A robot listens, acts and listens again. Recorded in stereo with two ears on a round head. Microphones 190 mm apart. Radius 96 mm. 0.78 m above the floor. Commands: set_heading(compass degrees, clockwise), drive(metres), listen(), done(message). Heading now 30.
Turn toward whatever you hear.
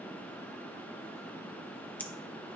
set_heading(0)
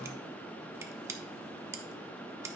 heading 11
set_heading(26)
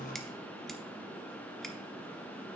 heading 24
listen()
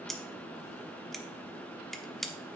done("Found it: scissors, straight ahead, under 1 m away.")